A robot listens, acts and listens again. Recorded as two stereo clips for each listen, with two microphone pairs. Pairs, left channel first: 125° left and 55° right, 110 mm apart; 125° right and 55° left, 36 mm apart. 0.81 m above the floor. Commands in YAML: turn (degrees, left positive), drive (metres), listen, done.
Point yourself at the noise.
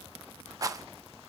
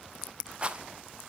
done: "Found it: a rattle, straight ahead."